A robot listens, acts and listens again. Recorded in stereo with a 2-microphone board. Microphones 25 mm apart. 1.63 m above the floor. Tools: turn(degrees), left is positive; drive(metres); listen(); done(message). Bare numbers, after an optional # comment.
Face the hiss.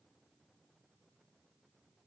listen()
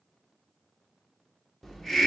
turn(30)
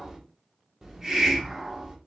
# So it is at 20° right.
turn(-20)
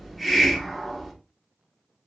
done("Found it: a hiss, straight ahead.")